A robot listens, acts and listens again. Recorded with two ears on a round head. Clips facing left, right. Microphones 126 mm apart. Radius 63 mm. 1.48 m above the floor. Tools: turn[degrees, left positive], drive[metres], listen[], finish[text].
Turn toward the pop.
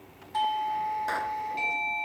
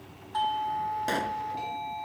Thought: The pop: about 30° right or 150° right.
Action: turn[-30]
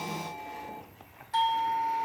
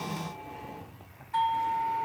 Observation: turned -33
Action: listen[]
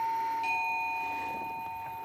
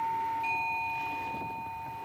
Action: finish[I heard a pop, but can't make it out now. It was about 5° left or 115° right.]